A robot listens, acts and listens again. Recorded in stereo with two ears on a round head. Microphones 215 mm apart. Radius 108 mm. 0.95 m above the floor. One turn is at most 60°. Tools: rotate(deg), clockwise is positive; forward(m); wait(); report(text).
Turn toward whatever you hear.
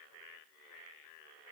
wait()
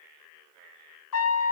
rotate(-60)
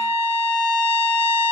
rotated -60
rotate(-30)
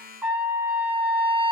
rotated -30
rotate(10)
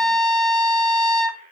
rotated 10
report("Facing the trumpet, under 1 m away.")